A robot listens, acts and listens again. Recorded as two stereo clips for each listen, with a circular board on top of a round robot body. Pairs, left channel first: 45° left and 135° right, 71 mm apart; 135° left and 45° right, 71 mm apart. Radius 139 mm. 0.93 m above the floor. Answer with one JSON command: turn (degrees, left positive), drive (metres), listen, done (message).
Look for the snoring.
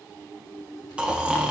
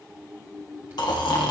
{"turn": 150}
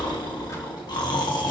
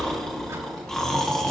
{"turn": 55}
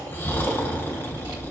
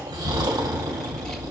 {"turn": -15}
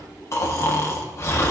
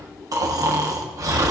{"done": "Found it: snoring, straight ahead, 1 to 2 m away."}